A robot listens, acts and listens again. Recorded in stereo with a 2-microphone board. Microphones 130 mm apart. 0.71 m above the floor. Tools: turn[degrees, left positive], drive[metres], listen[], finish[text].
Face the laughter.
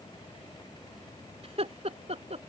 Thought: The laughter: about 60° right or 120° right.
Action: turn[-60]
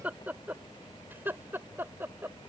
Thought: So it is at 20° right.
Action: turn[-20]
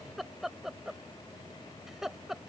Action: finish[Facing the laughter.]